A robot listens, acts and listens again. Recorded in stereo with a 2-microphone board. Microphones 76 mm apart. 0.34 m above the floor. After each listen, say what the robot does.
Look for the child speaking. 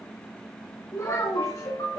Turn 45° left.
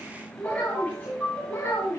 Turn 35° left.
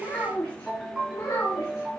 Turn 35° left.
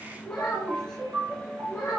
Turn 15° left.
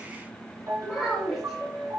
Facing the child speaking, 2 to 4 m away.